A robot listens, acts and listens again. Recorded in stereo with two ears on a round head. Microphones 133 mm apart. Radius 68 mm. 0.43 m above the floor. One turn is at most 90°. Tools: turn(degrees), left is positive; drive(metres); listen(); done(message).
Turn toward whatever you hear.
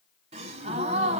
turn(degrees=-40)
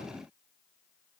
listen()
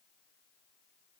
done("I heard a gasp, but can't make it out now. It was about straight ahead or 100° right.")